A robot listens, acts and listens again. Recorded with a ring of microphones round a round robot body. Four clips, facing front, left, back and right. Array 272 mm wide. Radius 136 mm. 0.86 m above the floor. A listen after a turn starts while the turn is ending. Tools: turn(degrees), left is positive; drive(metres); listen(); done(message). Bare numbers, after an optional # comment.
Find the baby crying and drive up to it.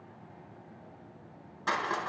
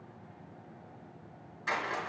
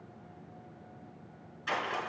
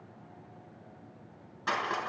listen()
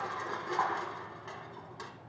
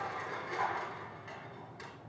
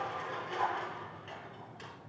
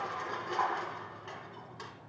listen()
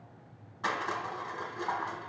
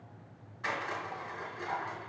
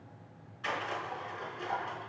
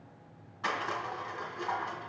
done("I can't make out a baby crying to turn to.")